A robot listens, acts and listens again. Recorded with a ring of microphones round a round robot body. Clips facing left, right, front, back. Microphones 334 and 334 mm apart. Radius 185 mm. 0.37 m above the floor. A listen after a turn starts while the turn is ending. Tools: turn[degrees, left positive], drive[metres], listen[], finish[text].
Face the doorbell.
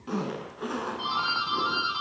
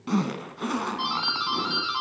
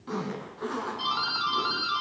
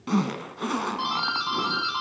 Thought: The doorbell: 105° right.
Action: turn[-105]
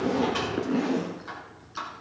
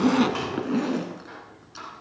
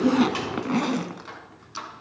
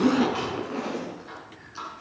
Thought: The doorbell is now 20° left.
Action: turn[20]
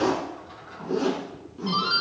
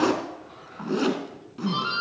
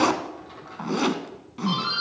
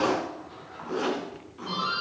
Action: finish[Facing the doorbell.]